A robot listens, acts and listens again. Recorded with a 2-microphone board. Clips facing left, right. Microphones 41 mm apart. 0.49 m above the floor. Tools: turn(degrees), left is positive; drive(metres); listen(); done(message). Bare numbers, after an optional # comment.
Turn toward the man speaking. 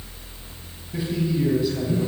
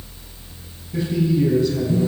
turn(30)
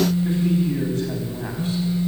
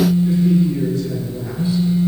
# So it is at 130° left.
turn(130)
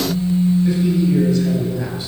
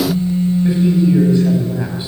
# The man speaking is now 25° right.
turn(-25)
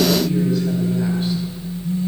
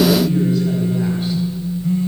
listen()
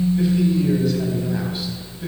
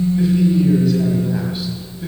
done("Found it: a man speaking, straight ahead.")